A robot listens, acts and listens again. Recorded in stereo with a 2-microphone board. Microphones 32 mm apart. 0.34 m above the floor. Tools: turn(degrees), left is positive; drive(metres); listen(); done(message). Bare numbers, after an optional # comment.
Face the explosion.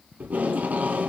listen()
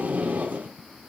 listen()
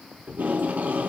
done("I can't make out an explosion to turn to.")